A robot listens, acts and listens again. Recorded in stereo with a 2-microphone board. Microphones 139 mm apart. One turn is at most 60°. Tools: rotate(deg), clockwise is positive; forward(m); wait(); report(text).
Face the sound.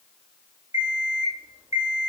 rotate(25)
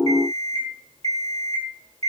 rotate(60)
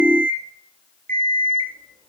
rotate(60)
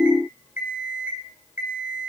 rotate(15)
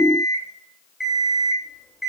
report("Facing the alarm clock, 2 to 4 m away.")